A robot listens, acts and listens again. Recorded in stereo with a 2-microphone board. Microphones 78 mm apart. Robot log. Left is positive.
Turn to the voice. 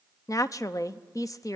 note: The woman speaking: about 45° left or 135° left.
cmd yaw +45
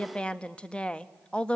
note: So it is at 15° left.
cmd yaw +15
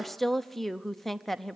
end: Facing the woman speaking.